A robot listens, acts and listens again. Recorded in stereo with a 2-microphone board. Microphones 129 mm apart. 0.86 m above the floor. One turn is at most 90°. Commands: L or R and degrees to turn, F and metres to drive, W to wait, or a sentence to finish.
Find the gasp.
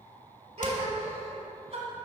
R55
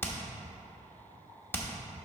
W
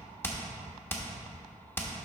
I heard a gasp, but can't make it out now. It was about straight ahead or 70° right.